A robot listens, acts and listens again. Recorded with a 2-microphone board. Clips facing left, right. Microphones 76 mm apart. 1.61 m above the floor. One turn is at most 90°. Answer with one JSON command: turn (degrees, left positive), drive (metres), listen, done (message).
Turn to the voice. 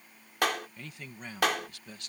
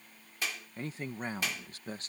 {"turn": -35}
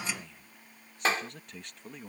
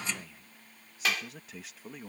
{"done": "Found it: a man speaking, straight ahead."}